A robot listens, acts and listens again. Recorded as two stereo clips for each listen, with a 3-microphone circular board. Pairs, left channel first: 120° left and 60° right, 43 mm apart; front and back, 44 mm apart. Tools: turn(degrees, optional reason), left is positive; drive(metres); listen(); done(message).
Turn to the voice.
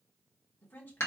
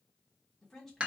turn(degrees=85, reason="The woman speaking: 85° left.")
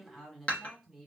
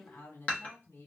turn(degrees=25, reason="The woman speaking is now 25° left.")
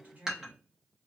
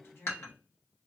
turn(degrees=-15, reason="The woman speaking is now 15° right.")
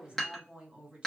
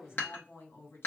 done("Found it: a woman speaking, straight ahead.")